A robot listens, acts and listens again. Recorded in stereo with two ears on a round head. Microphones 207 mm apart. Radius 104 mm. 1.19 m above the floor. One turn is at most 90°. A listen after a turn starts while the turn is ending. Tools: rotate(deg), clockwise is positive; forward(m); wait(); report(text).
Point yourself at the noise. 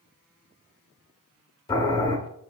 rotate(-20)
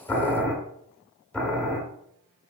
report("Found it: boiling, straight ahead, 1 to 2 m away.")